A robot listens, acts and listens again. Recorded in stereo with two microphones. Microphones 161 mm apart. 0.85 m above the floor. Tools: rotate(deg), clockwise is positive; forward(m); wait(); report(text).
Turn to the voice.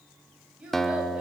rotate(30)
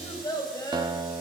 rotate(-25)
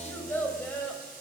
rotate(-10)
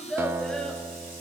report("Found it: a child speaking, straight ahead.")